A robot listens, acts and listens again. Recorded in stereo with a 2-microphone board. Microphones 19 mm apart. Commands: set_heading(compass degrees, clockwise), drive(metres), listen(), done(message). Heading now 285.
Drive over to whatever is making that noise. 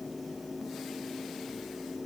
listen()
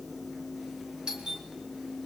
set_heading(340)
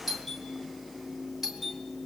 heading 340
set_heading(350)
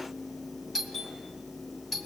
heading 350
drive(1.0)
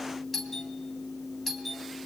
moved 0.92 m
drive(1.0)
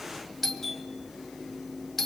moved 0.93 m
set_heading(340)
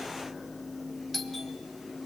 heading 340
drive(1.0)
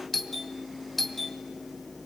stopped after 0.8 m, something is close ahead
done("Arrived at the doorbell, straight ahead.")